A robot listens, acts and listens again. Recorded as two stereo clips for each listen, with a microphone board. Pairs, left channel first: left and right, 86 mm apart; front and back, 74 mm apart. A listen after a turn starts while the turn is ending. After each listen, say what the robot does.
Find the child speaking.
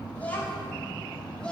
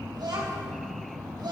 Turn 170° left.
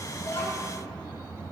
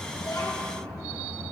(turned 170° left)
Keep listening.
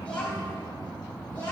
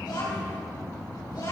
Turn 15° left.
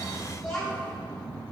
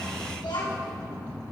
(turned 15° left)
Found it: a child speaking, straight ahead, over 4 m away.